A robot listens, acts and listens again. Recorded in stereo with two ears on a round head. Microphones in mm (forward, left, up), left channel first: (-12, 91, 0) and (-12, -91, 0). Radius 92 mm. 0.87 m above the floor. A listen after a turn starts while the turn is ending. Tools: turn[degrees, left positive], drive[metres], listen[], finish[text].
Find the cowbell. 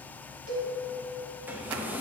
Thought: The cowbell: about 70° right or 110° right.
Action: turn[-70]
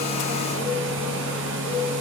Action: listen[]
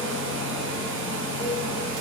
Action: listen[]
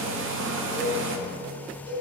Thought: So it is at 25° right.
Action: turn[-25]
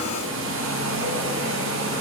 Action: listen[]
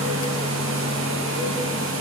Action: listen[]
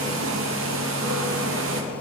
Action: finish[I heard a cowbell from this way, but can't make it out now.]